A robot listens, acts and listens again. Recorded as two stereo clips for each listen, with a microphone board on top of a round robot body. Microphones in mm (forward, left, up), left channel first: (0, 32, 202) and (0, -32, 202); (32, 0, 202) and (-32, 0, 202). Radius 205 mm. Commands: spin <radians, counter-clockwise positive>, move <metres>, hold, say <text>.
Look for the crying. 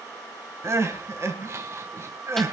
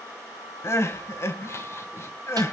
spin -0.79
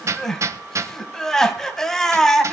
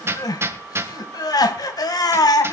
spin 0.17
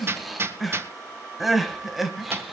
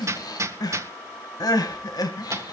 say Found it: crying, straight ahead, 2 to 4 m away.